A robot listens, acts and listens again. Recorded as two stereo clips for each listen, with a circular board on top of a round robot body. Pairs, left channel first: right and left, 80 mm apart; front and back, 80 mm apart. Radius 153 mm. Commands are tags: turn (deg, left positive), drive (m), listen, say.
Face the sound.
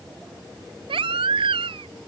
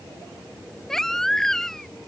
<turn deg="85"/>
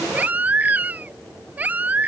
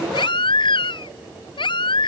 <turn deg="20"/>
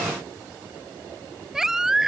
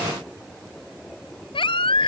<say>Found it: a baby crying, straight ahead.</say>